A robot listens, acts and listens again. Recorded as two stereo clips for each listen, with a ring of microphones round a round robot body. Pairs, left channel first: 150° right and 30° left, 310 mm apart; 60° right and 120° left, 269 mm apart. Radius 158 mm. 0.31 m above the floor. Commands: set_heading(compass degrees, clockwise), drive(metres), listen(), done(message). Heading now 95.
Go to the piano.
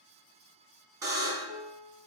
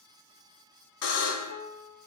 set_heading(180)
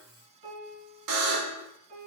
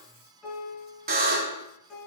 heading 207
set_heading(177)
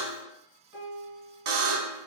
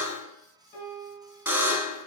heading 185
drive(1.0)
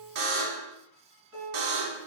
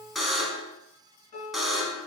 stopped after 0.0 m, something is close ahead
done("Blocked. The piano is further on, straight ahead.")